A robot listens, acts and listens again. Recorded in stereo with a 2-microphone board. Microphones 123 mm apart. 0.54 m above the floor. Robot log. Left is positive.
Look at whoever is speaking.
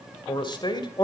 note: The man speaking: about 40° left or 140° left.
cmd yaw +40
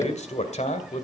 note: So it is at 100° left.
cmd yaw +100
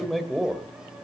end: Found it: a man speaking, straight ahead.